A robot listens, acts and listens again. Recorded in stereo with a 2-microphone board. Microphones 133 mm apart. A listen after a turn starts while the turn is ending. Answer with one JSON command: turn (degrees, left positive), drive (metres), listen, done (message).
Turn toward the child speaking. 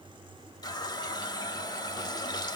{"listen": true}
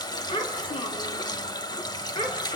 {"turn": 40}
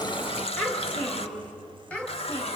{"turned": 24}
{"turn": 10}
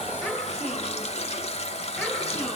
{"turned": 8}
{"done": "Found it: a child speaking, straight ahead, over 4 m away."}